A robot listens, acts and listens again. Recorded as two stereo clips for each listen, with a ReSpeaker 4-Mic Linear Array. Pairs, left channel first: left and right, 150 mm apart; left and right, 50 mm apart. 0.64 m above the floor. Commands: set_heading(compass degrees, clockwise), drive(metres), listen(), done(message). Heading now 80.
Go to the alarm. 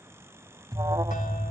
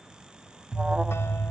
set_heading(105)
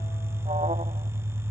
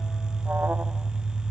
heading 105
set_heading(235)
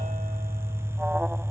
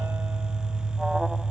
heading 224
set_heading(234)
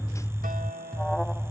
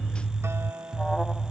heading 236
drive(1.0)
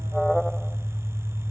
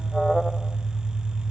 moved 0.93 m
drive(1.0)
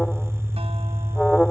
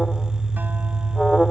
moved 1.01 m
drive(1.0)
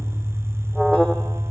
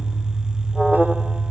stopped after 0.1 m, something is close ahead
done("Arrived at the alarm, straight ahead.")